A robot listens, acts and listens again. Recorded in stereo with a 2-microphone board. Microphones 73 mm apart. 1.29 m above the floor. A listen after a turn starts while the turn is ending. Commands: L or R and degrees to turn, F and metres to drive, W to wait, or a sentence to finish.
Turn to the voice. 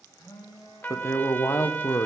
L45
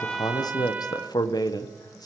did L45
L85
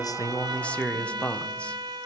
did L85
L15
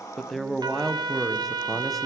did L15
Facing the man speaking.